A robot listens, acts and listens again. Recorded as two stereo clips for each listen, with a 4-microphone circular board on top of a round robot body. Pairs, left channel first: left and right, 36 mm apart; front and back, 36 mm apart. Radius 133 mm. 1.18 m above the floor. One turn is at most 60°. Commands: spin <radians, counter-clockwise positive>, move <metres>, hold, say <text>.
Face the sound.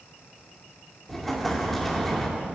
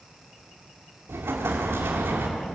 spin 1.05
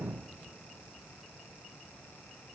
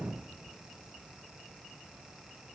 spin 1.05
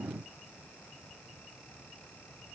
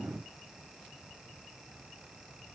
spin 0.96
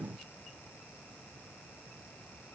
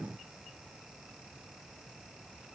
say Facing where the explosion came from. I can't hear it now.